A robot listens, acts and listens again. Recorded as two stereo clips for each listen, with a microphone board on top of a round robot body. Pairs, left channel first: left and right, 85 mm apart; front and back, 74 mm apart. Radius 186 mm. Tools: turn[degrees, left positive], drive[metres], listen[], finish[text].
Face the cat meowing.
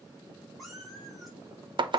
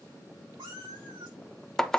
Thought: The cat meowing: straight behind.
Action: turn[180]
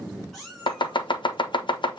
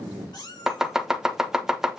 Action: finish[Facing the cat meowing, over 4 m away.]